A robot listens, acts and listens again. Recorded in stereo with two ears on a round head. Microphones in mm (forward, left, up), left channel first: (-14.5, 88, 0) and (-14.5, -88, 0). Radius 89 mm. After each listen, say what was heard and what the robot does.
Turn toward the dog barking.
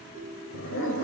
The dog barking: about 65° left or 115° left. Turn 65° left.
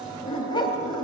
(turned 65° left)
So it is at 25° left. Turn 25° left.
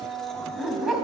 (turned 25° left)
Facing the dog barking.